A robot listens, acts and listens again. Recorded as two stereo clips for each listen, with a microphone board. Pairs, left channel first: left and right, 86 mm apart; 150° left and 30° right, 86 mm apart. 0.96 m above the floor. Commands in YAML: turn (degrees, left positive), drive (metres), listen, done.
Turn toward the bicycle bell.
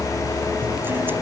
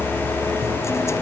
listen: true
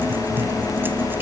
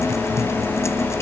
listen: true
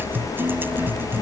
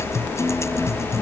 done: "I can't make out a bicycle bell."